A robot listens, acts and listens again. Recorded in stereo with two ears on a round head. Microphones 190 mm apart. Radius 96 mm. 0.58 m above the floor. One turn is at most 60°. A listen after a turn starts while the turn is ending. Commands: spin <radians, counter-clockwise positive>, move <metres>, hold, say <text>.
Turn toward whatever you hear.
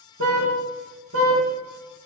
spin -1.05
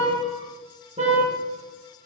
spin -0.52
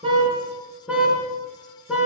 say Found it: a car horn, straight ahead, over 4 m away.